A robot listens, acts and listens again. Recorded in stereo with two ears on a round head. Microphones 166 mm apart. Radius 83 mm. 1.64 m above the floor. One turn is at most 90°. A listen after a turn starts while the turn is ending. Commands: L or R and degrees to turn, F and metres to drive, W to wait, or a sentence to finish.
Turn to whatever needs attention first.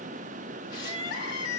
L65
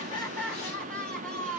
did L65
Facing the crying, 1 to 2 m away.